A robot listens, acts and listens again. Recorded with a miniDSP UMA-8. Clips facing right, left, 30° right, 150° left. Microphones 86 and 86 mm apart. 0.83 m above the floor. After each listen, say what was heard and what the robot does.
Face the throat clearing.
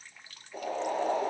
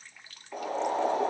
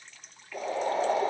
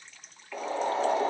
Keep listening.
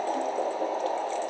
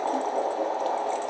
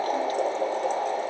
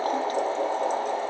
Keep listening.
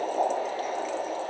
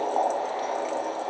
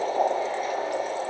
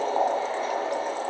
I can't make out throat clearing, only boiling.